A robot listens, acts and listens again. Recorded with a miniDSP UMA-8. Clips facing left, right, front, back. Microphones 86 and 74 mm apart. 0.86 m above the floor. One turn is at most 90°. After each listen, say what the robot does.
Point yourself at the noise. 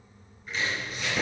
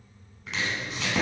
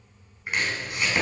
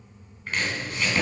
Turn 75° right.
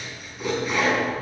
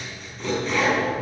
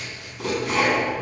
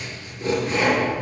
Found it: chopping, straight ahead, 2 to 4 m away.